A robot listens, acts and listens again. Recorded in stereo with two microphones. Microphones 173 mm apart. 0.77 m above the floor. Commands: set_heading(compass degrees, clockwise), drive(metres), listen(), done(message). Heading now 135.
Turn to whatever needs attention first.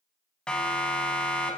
set_heading(105)
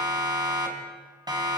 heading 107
set_heading(132)
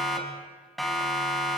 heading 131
done("Found it: a siren, straight ahead.")